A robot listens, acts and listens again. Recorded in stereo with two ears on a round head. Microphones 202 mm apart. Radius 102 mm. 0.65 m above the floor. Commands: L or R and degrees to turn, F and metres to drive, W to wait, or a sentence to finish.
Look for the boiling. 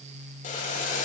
L35
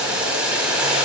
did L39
Found it: boiling, straight ahead.